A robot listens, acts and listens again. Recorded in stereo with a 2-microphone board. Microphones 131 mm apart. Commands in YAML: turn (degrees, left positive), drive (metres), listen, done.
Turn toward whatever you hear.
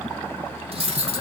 turn: -45
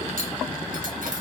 listen: true
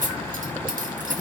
turn: -85
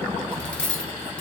turn: 10
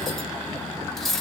done: "Facing the cutlery clinking."